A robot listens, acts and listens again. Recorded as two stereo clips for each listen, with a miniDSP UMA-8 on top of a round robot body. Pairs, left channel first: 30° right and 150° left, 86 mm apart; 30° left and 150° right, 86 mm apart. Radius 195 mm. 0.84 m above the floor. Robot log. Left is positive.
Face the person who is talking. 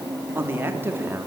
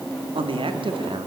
note: The man speaking: 145° right.
cmd yaw -145
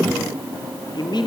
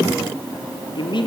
end: Found it: a man speaking, straight ahead.